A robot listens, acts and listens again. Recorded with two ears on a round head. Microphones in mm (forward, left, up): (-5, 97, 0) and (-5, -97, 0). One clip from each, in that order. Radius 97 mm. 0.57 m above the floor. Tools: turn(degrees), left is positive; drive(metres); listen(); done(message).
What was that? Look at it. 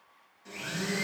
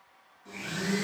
turn(degrees=35)
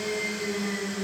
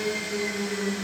done("Facing the blender.")